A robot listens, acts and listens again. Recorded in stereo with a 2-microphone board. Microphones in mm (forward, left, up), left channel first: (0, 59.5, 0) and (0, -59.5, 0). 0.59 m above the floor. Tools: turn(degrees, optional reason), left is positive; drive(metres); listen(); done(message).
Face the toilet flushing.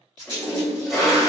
turn(degrees=-30)
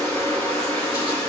turn(degrees=25, reason="So it is at 25° left.")
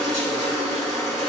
done("Found it: a toilet flushing, straight ahead, 1 to 2 m away.")